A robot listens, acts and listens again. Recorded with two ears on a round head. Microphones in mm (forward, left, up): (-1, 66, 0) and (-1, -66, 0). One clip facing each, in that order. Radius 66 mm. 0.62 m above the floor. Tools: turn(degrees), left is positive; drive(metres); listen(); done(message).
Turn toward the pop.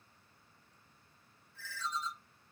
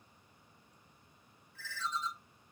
listen()
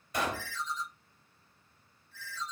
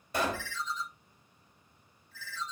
turn(degrees=-30)
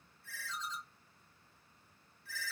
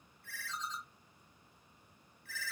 listen()
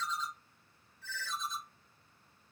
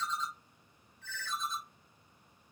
done("I heard a pop, but can't make it out now. It was about straight ahead or 120° right.")